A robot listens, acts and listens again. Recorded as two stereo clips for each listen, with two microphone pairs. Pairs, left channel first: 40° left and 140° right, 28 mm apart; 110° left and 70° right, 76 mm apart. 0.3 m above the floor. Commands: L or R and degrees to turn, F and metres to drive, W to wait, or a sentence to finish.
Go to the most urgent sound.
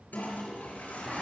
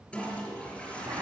W
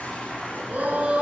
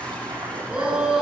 R150
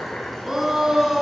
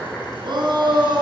R65
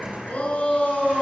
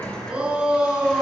F1.0
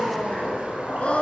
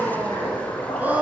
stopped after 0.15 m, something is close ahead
Blocked. The shout is further on, straight ahead.